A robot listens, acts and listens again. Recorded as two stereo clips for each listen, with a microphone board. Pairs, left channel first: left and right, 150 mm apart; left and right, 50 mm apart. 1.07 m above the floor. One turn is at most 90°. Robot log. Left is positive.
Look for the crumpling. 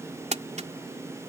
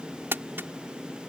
note: The crumpling: about 50° right or 130° right.
cmd yaw -50
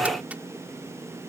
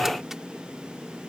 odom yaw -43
cmd idle
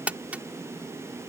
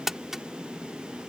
note: So it is at 10° right.
cmd yaw -10
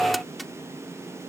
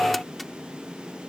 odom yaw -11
cmd idle
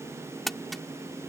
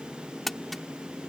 end: Found it: crumpling, straight ahead.